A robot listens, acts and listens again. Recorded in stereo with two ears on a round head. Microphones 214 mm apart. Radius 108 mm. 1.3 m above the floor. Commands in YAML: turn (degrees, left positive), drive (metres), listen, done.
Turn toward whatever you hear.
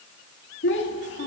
turn: 50
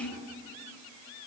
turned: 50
turn: 75
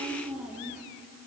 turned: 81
done: "Facing the child speaking."